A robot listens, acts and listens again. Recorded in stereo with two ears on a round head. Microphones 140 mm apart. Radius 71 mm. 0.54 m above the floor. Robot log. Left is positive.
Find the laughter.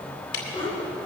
note: The laughter: about 35° left or 145° left.
cmd yaw +35
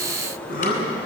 note: So it is at 120° left.
cmd yaw +120
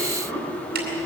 note: The laughter is now 10° left.
cmd yaw +10
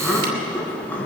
note: The laughter is now 10° left.
cmd yaw +10
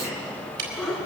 end: Found it: laughter, straight ahead.